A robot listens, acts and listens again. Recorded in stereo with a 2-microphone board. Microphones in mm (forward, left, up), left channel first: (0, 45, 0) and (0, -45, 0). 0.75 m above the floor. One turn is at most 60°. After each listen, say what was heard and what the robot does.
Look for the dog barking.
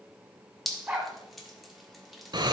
The dog barking: about 15° right or 165° right. Turn 15° right.
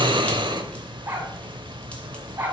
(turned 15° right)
So it is at 150° right. Turn 60° right.
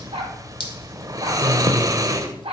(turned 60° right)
The dog barking is now 90° right. Turn 60° right.
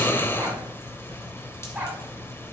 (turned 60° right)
The dog barking is now 15° right. Turn 15° right.
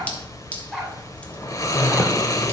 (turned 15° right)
Facing the dog barking, 2 to 4 m away.